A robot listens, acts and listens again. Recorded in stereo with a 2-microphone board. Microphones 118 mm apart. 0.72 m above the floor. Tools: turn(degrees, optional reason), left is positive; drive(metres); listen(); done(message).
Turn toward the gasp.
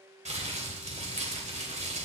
listen()
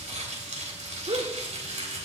turn(degrees=-60, reason="The gasp: about 60° right or 120° right.")
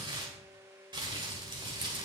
listen()
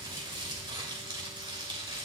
done("I heard a gasp, but can't make it out now. It was about straight ahead or 60° right.")